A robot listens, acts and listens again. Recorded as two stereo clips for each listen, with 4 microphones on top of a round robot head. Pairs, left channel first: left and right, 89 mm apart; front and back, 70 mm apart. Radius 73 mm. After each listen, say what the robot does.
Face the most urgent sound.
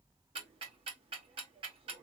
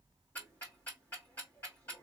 Keep listening.
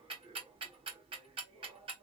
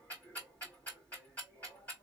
Keep listening.
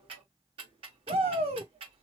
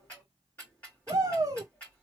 Turn 120° right.
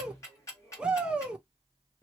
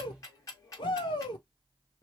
Turn 10° right.
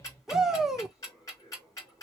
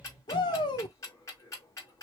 Found it: a shout, straight ahead, 1 to 2 m away.